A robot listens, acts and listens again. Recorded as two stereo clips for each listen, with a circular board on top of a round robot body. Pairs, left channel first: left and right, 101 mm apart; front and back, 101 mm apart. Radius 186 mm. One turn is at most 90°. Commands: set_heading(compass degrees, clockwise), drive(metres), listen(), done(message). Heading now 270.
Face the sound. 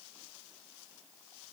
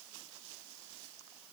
listen()
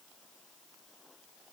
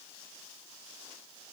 listen()
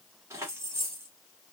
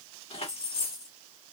set_heading(295)
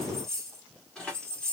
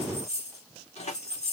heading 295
set_heading(285)
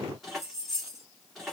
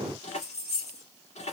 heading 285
done("Found it: keys jangling, straight ahead, 2 to 4 m away.")